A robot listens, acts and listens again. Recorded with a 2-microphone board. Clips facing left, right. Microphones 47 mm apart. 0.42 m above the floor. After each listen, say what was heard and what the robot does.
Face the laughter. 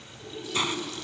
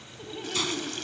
The laughter: about 40° right or 140° right. Turn 40° right.
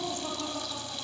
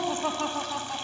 So it is at 115° right. Turn 115° right.
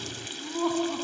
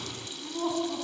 The laughter is now 20° left. Turn 20° left.
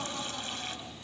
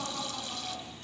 Facing the laughter, over 4 m away.